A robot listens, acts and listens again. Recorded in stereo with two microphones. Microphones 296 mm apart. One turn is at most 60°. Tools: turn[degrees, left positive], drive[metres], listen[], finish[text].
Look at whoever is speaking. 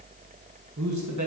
Thought: The man speaking: about 65° right or 115° right.
Action: turn[-60]
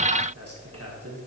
Thought: So it is at 50° right.
Action: turn[-50]
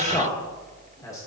Thought: The man speaking is now 10° left.
Action: turn[10]
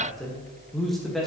Action: finish[Facing the man speaking, 1 to 2 m away.]